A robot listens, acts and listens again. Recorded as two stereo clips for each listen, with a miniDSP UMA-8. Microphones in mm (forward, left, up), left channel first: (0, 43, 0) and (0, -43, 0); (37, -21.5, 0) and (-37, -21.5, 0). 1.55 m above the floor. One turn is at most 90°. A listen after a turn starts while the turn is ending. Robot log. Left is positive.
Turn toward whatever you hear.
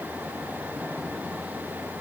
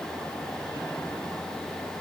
cmd idle
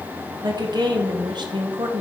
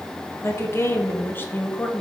note: The woman speaking: 70° right.
cmd yaw -70
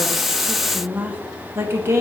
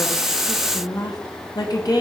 note: The woman speaking is now 35° right.
cmd yaw -35
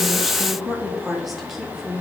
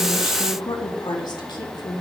end: Facing the woman speaking.